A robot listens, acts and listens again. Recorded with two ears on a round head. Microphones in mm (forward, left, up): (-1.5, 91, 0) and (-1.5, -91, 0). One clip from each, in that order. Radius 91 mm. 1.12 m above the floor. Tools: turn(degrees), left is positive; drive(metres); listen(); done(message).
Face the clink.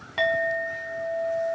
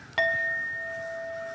turn(degrees=-30)
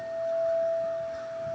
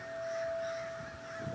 turn(degrees=-140)
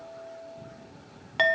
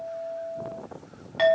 turn(degrees=25)
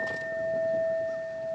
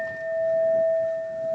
done("Facing the clink, 1 to 2 m away.")